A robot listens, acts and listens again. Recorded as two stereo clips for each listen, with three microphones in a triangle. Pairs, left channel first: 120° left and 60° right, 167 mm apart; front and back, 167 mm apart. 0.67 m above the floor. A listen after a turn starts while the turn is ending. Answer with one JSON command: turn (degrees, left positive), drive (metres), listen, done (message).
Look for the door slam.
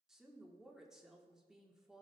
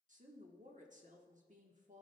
{"listen": true}
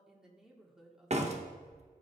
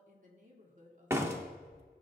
{"turn": -105}
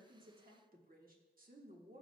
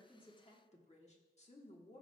{"done": "Facing where the door slam came from. I can't hear it now."}